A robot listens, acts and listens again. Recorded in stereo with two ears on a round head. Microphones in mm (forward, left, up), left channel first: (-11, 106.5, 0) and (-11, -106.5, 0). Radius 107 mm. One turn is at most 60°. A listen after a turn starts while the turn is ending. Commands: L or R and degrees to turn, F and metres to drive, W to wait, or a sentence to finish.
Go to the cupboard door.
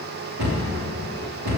R60
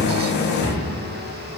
R20
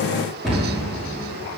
F1.0
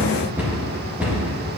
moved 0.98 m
F1.0
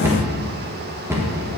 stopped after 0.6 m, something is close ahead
R10
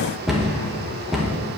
I am next to the cupboard door.